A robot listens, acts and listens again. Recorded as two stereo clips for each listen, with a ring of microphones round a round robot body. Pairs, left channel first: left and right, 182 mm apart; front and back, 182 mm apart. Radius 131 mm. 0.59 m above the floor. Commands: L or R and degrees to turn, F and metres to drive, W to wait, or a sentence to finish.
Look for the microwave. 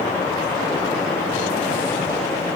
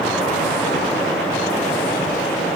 W
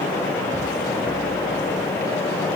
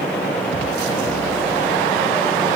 W
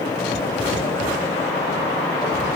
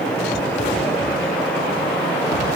I can't make out a microwave to turn to.